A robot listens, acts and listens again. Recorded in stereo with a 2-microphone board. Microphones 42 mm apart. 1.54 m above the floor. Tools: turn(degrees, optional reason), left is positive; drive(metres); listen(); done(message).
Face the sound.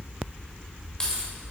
turn(degrees=20, reason="The keys jangling: about 20° left or 160° left.")
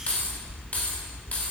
turn(degrees=135, reason="So it is at 135° left.")
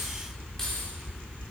listen()
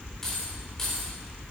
turn(degrees=10, reason="The keys jangling is now 10° left.")
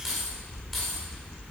done("Found it: keys jangling, straight ahead.")